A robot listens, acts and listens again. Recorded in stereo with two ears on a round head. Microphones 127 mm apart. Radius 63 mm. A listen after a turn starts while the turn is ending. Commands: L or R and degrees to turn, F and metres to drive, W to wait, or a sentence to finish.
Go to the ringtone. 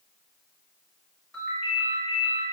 L30
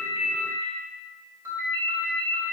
R20
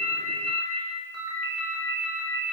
F1.0
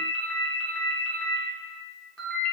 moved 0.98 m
L10
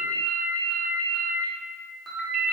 F1.0
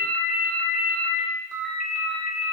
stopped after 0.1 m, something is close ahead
I am next to the ringtone.